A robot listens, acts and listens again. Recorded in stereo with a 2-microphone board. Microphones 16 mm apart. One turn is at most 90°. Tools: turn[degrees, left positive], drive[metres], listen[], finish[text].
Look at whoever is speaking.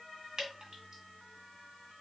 Action: listen[]
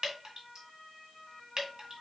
Action: listen[]
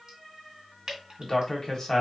Thought: The man speaking: about 35° left or 145° left.
Action: turn[35]
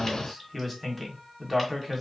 Thought: So it is at 10° left.
Action: turn[10]
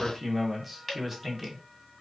Action: finish[Found it: a man speaking, straight ahead.]